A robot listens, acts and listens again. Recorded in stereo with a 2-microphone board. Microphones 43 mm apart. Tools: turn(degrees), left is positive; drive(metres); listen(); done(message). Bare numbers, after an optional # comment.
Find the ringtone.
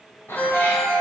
# The ringtone: about 50° left or 130° left.
turn(50)
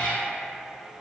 listen()
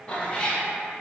listen()
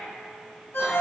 # So it is at 75° left.
turn(75)
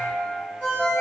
# The ringtone is now 30° left.
turn(30)
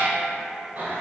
listen()
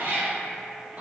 listen()
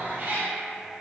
done("Facing where the ringtone came from. I can't hear it now.")